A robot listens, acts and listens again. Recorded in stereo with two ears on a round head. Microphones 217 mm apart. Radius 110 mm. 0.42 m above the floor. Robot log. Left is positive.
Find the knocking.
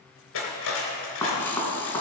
cmd yaw +30
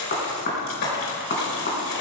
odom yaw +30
note: So it is at 135° left.
cmd yaw +135
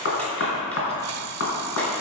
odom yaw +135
note: The knocking is now 55° left.
cmd yaw +55
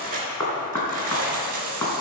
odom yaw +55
note: The knocking is now 15° left.
cmd yaw +15
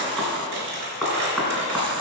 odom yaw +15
end: Facing the knocking, 2 to 4 m away.